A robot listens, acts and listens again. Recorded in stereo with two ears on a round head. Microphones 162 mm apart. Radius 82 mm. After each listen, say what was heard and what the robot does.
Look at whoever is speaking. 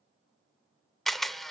Keep listening.
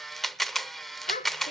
The child speaking: about 45° left or 135° left. Turn 45° left.
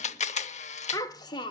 So it is at 25° left. Turn 25° left.
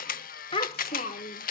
The child speaking is now 40° left. Turn 40° left.
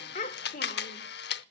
The child speaking is now 45° left. Turn 45° left.
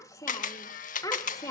The child speaking is now 15° left. Turn 15° left.
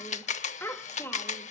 The child speaking is now 10° left. Turn 10° left.
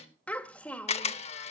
Facing the child speaking, 1 to 2 m away.